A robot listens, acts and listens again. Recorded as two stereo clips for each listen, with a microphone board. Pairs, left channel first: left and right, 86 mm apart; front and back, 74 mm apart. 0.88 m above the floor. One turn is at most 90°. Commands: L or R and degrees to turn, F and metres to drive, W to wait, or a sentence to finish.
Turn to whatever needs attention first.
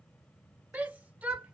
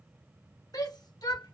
R20
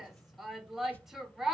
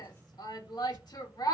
Facing the shout.